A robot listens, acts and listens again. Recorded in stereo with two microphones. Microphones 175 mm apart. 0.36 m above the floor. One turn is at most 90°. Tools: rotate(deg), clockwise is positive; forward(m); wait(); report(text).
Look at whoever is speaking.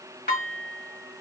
wait()
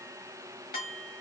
wait()
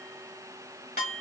report("I can't make out anyone speaking to turn to.")